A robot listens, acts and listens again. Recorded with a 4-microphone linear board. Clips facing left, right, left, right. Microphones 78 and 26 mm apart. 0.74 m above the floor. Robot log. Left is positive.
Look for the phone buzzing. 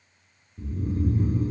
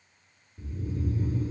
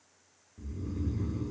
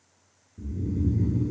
cmd idle
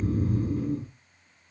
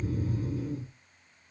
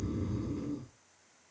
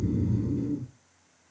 cmd idle
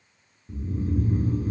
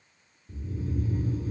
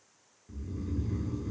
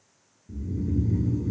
end: I can't make out a phone buzzing to turn to.